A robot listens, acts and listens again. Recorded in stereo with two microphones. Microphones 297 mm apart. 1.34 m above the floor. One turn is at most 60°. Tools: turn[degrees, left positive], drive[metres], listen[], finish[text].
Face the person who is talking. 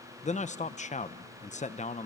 Thought: The man speaking: about 25° left or 155° left.
Action: turn[25]
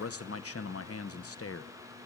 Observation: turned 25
Thought: So it is at 130° left.
Action: turn[60]
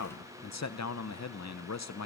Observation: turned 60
Thought: The man speaking is now 65° left.
Action: turn[60]
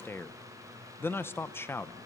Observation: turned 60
Thought: The man speaking is now 10° left.
Action: turn[10]
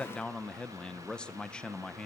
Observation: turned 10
Action: finish[Found it: a man speaking, straight ahead.]